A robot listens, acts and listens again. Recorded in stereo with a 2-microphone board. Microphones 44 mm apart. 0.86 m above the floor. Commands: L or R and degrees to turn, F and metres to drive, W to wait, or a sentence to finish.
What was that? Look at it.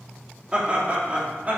R35
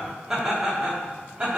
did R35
R25
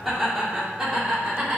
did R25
R15
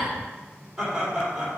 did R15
R10
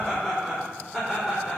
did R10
Found it: laughter, straight ahead.